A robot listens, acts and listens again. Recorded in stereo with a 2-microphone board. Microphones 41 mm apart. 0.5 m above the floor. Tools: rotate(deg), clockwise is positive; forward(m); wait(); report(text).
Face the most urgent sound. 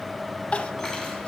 rotate(-30)
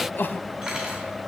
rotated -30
rotate(-120)
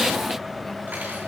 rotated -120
wait()
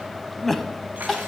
report("Facing the crying.")